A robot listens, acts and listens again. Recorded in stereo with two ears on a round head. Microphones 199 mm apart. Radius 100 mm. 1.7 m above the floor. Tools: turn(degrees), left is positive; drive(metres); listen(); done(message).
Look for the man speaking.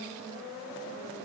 listen()
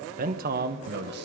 turn(degrees=-45)
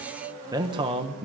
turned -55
turn(degrees=-30)
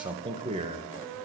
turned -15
turn(degrees=-30)
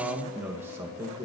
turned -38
turn(degrees=-15)
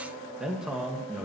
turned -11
done("Found it: a man speaking, straight ahead.")